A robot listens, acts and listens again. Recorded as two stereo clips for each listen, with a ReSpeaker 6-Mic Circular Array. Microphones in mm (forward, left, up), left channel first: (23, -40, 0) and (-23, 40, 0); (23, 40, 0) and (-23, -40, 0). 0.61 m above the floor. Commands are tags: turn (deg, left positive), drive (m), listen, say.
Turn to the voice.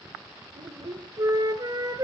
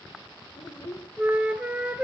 <turn deg="100"/>
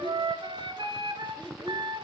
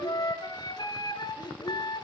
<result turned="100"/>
<turn deg="30"/>
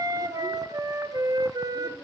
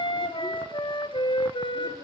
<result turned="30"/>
<listen/>
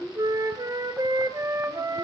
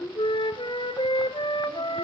<turn deg="10"/>
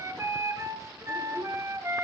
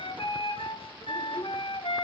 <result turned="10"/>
<listen/>
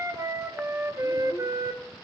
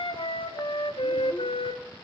<listen/>
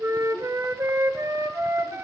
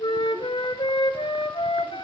<say>Facing where the child speaking came from. I can't hear it now.</say>